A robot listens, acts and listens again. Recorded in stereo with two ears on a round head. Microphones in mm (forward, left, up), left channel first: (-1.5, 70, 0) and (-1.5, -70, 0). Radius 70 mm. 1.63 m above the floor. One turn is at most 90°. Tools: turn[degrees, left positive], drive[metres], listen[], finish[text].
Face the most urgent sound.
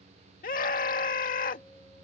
Thought: The scream: about 60° left or 120° left.
Action: turn[60]
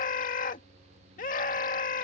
Thought: So it is at 55° left.
Action: turn[55]
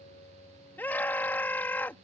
Thought: The scream is now 15° left.
Action: turn[15]
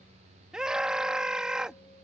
Action: finish[Facing the scream.]